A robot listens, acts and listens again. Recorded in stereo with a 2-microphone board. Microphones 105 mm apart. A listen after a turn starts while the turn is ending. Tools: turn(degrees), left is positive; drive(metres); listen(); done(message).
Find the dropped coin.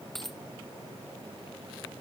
turn(degrees=30)
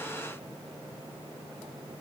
listen()
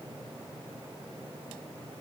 done("I heard a dropped coin, but can't make it out now. It was about 30° right or 150° left.")